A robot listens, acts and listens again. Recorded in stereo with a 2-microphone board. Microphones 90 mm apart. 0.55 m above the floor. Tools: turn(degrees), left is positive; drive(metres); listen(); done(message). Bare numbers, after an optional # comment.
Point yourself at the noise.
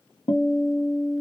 # The guitar: about 60° left or 120° left.
turn(60)
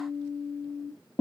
# So it is at 10° left.
turn(10)
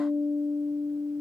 done("Found it: a guitar, straight ahead.")